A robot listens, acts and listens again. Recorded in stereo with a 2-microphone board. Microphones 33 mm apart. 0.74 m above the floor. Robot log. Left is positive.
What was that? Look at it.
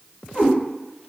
note: The cat meowing: about 75° left or 105° left.
cmd yaw +75
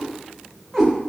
end: Facing the cat meowing.